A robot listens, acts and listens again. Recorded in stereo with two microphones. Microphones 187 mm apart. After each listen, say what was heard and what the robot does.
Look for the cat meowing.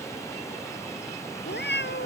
Turn 90° left.
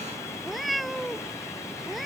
Facing the cat meowing.